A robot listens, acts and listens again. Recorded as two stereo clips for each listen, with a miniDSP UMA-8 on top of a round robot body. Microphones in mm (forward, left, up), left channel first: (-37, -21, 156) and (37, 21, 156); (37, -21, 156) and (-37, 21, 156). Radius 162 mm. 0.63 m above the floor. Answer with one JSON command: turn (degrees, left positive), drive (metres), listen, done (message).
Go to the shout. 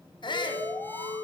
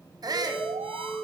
{"turn": -170}
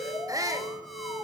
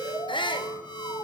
{"turn": -15}
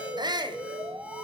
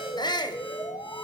{"drive": 1.0}
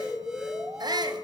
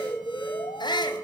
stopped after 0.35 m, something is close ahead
{"done": "Blocked. The shout is further on, straight ahead."}